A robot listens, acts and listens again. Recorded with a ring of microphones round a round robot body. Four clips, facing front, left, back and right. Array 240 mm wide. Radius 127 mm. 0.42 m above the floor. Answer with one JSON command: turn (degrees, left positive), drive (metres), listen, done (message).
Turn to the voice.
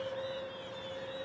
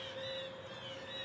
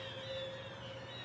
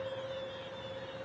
{"listen": true}
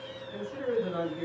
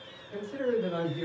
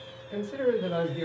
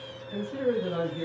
{"turn": 180}
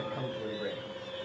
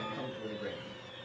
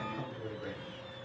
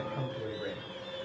{"listen": true}
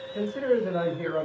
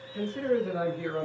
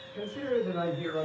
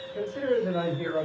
{"turn": -25}
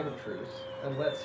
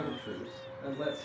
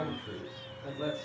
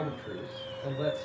{"done": "Found it: a man speaking, straight ahead, 1 to 2 m away."}